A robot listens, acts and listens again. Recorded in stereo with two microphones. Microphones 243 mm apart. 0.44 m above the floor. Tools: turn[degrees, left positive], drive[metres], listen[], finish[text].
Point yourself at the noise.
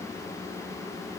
Action: listen[]
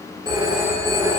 Thought: The phone ringing: about 20° right or 160° right.
Action: turn[-20]
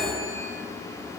Action: finish[Found it: a phone ringing, straight ahead.]